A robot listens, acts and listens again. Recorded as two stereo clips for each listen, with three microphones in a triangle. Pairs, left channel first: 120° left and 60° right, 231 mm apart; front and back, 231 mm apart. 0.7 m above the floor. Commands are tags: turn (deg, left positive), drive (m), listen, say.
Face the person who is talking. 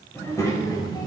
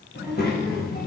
<turn deg="50"/>
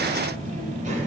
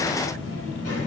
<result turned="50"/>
<say>Found it: a child speaking, straight ahead.</say>